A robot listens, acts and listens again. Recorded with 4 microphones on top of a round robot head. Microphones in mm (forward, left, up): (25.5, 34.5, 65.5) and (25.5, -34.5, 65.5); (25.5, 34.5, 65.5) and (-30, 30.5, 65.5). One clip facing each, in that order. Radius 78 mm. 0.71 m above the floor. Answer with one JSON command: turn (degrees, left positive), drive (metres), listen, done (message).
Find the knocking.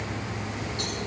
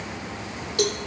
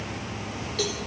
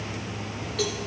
{"listen": true}
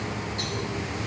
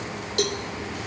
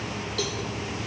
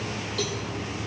{"listen": true}
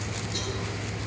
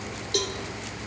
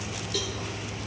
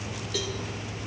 {"done": "I can't make out knocking, only a cowbell."}